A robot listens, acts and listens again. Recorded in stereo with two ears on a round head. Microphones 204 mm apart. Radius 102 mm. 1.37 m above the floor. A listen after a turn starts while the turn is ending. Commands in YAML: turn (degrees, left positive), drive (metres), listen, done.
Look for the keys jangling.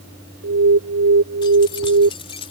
turn: 25
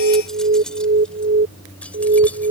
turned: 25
done: "Facing the keys jangling."